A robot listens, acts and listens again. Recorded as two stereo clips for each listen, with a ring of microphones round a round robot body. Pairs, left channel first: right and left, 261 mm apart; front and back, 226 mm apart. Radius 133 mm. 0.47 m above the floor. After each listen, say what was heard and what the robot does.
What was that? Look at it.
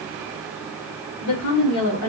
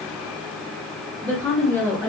The woman speaking: 75° right. Turn 75° right.
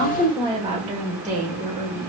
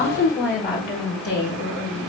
The woman speaking is now 40° left. Turn 40° left.
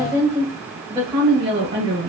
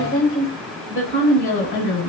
The woman speaking is now 20° left. Turn 20° left.
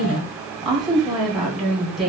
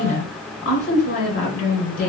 Facing the woman speaking.